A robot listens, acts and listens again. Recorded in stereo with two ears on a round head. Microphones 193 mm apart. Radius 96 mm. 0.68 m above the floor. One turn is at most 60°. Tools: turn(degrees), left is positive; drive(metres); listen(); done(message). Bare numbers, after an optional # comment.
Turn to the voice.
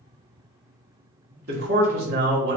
# The man speaking: about 50° right or 130° right.
turn(-50)
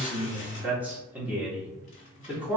# So it is at 10° right.
turn(-10)
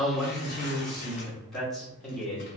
done("Found it: a man speaking, straight ahead, 1 to 2 m away.")